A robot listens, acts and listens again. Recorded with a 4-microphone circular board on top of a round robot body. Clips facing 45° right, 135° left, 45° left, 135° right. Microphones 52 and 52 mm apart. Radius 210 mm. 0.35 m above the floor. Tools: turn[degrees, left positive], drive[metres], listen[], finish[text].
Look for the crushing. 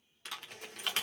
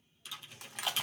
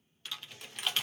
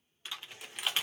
Thought: The crushing: 140° left.
Action: turn[140]
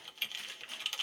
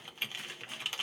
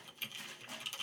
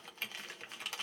Action: listen[]
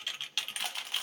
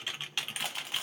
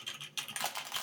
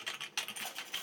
Thought: The crushing is now 50° left.
Action: turn[50]
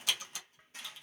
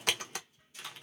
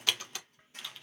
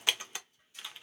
Action: listen[]
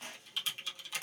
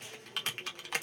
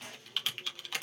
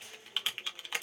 Action: finish[Found it: crushing, straight ahead, under 1 m away.]